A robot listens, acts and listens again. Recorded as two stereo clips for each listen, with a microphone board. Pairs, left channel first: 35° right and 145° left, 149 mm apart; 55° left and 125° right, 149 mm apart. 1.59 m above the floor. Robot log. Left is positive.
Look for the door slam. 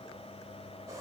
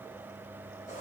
cmd idle
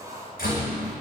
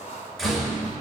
note: The door slam: 30° right.
cmd yaw -30
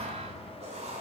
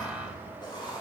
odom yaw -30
end: I heard a door slam from this way, but can't make it out now.